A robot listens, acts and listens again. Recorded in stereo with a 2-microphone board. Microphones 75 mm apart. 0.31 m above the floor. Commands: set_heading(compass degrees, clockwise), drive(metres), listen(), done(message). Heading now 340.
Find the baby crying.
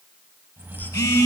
listen()
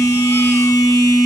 listen()
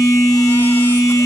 done("I can't make out a baby crying to turn to.")